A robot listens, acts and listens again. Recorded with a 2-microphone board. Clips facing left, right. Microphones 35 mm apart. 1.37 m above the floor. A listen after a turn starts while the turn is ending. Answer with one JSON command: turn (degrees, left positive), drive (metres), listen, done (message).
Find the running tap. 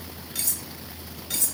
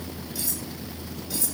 {"listen": true}
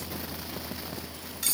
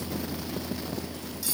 {"listen": true}
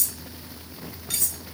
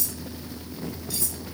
{"done": "I can't make out a running tap to turn to."}